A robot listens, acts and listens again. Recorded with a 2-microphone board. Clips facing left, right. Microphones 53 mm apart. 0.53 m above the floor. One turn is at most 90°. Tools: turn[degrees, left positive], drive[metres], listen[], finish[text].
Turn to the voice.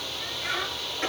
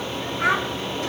Action: turn[-90]
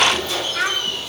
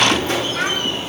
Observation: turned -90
Action: finish[Found it: a child speaking, straight ahead.]